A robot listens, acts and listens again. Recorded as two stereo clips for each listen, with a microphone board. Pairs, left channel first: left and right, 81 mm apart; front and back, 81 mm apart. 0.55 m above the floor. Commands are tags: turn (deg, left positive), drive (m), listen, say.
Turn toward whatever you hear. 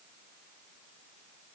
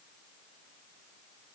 <listen/>
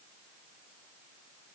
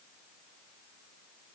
<listen/>
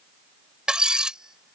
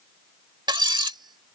<turn deg="-170"/>
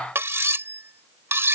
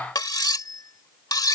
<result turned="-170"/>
<turn deg="-30"/>
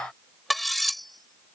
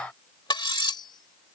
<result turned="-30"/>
<say>Found it: cutlery clinking, straight ahead.</say>